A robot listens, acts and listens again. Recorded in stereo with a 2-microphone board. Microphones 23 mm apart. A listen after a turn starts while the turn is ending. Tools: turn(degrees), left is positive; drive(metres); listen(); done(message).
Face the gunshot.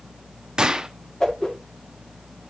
turn(degrees=-35)
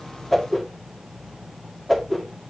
listen()
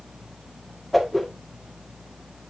done("I heard a gunshot, but can't make it out now. It was about straight ahead or 110° right.")